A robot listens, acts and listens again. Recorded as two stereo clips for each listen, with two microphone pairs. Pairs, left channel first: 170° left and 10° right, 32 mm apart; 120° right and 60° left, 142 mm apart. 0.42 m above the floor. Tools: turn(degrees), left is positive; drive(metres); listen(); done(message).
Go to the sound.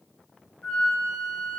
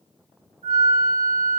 turn(degrees=-140)
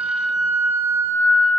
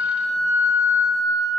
turn(degrees=-50)
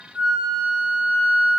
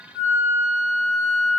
turn(degrees=-25)
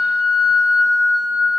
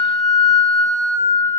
drive(metres=1.0)
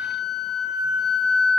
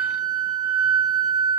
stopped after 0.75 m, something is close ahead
turn(degrees=-10)
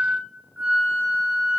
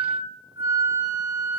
done("Arrived at the flute, straight ahead.")